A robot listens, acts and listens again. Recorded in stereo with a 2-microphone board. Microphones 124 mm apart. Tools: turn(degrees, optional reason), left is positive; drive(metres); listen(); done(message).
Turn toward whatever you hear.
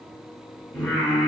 turn(degrees=30)
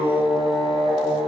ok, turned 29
turn(degrees=-50, reason="So it is at 50° right.")
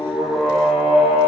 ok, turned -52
turn(degrees=-20, reason="The singing is now 20° right.")
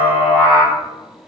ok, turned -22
turn(degrees=-15, reason="The singing is now 15° right.")
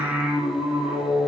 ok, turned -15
turn(degrees=-10, reason="The singing is now 10° right.")
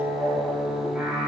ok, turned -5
done("Facing the singing, 1 to 2 m away.")